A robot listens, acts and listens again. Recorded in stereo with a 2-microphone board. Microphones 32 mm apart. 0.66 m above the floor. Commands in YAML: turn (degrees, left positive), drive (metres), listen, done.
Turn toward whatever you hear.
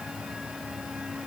listen: true
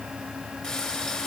turn: 35
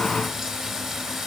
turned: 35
done: "Facing the frying."